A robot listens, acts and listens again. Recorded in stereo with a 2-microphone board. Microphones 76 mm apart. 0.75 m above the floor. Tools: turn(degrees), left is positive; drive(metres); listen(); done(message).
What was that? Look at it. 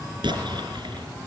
turn(degrees=-90)
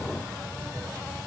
done("Facing where the explosion came from. I can't hear it now.")